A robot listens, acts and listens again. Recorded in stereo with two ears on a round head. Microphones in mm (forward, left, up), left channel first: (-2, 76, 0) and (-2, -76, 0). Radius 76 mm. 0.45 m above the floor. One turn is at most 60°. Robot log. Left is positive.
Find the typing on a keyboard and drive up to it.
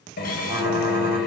cmd yaw -30
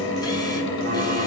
cmd idle
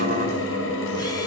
cmd idle
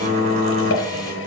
note: So it is at 135° right.
cmd yaw -60
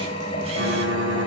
note: The typing on a keyboard is now 75° right.
cmd yaw -60
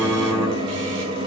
note: The typing on a keyboard is now 15° right.
cmd yaw -15
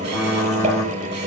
cmd fwd 1.0
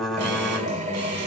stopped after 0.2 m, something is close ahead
end: Blocked. The typing on a keyboard is further on, straight ahead.